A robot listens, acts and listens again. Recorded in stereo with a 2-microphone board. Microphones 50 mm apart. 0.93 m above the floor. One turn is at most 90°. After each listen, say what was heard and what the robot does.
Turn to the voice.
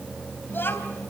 The child speaking: about 45° left or 135° left. Turn 45° left.
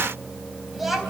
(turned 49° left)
Found it: a child speaking, straight ahead, 2 to 4 m away.